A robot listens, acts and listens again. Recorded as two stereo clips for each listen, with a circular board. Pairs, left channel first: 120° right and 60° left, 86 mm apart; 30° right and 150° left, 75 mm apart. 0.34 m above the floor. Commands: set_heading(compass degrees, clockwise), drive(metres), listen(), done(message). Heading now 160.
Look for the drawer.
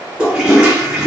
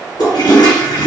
listen()
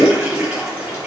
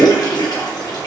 listen()
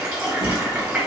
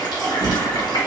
set_heading(240)
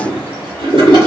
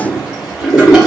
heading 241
listen()
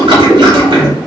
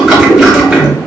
done("Facing the drawer.")